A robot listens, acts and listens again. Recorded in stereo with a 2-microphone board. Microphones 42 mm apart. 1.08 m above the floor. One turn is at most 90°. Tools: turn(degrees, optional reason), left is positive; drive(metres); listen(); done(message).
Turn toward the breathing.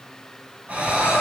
turn(degrees=-40, reason="The breathing: about 40° right or 140° right.")
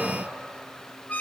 listen()
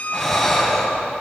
done("Facing the breathing, over 4 m away.")